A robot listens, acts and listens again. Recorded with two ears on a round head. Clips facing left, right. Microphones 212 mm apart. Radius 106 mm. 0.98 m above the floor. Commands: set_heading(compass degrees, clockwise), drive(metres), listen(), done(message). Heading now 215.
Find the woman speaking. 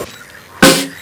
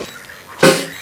listen()
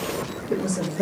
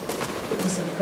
set_heading(185)
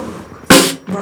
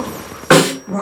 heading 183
set_heading(173)
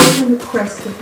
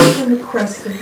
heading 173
set_heading(153)
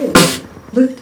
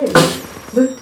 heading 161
set_heading(136)
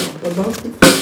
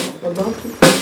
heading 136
set_heading(116)
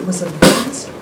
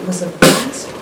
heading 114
done("Facing the woman speaking, 1 to 2 m away.")